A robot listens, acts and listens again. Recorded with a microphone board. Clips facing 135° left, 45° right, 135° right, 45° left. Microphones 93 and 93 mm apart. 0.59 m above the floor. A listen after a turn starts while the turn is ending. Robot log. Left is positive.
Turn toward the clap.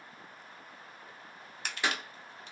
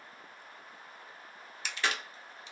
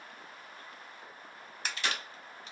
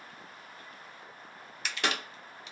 note: The clap: 60° left.
cmd yaw +60
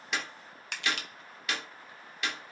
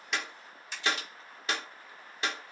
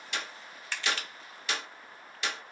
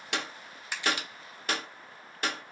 end: Found it: a clap, straight ahead, 1 to 2 m away.